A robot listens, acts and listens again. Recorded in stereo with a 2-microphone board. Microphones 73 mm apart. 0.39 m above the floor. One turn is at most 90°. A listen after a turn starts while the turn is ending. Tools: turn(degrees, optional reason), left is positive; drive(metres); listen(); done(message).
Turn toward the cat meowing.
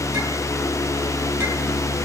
listen()
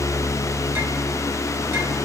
listen()
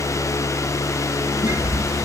turn(degrees=25, reason="The cat meowing: about 25° left or 155° left.")
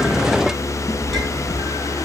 listen()
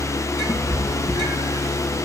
turn(degrees=90, reason="So it is at 130° left.")
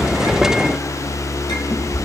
turn(degrees=50, reason="The cat meowing is now 50° left.")
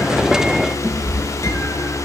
done("Facing the cat meowing, over 4 m away.")